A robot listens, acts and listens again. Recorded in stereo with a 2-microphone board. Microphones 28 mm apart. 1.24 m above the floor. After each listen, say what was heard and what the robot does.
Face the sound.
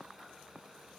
Keep listening.
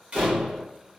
The door slam: about 40° right or 140° right. Turn 40° right.
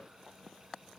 Keep listening.
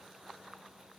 I heard a door slam, but can't make it out now. It was about straight ahead or 100° right.